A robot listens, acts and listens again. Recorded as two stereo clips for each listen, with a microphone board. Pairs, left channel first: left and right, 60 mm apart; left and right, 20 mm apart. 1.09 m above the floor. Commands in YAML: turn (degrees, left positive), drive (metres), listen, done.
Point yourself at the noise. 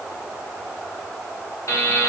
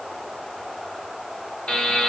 turn: 70
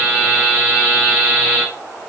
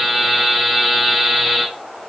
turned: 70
turn: 20
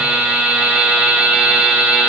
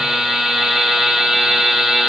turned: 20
done: "Facing the buzzer."